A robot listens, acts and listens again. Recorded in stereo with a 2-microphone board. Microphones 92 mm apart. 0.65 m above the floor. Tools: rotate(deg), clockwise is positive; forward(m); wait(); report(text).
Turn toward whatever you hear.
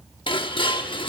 rotate(-65)
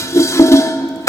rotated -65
rotate(-35)
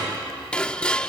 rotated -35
rotate(-10)
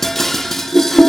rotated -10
report("Facing the dishes clattering.")